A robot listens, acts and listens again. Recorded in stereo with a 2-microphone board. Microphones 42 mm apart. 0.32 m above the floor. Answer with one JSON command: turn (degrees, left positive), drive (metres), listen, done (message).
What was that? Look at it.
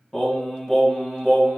{"turn": 30}
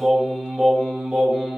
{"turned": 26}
{"turn": -15}
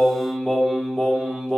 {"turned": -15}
{"done": "Found it: singing, straight ahead."}